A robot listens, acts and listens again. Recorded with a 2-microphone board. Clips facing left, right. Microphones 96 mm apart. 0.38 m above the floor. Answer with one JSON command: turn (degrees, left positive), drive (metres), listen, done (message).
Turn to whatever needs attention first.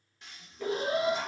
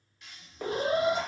{"turn": -40}
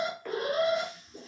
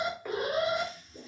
{"turn": -10}
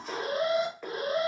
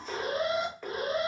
{"done": "Found it: an alarm, straight ahead, under 1 m away."}